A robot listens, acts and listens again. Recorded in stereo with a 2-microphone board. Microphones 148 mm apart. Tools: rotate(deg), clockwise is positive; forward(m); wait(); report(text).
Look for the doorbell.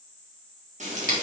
wait()
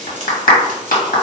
wait()
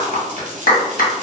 report("I can't make out a doorbell, only frying and a clap.")